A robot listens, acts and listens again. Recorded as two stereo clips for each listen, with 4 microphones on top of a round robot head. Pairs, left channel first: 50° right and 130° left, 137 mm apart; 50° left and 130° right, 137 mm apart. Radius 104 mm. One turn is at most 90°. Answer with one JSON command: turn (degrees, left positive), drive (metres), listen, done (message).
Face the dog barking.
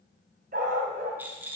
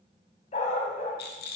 {"turn": 90}
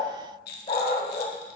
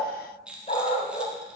{"done": "Facing the dog barking."}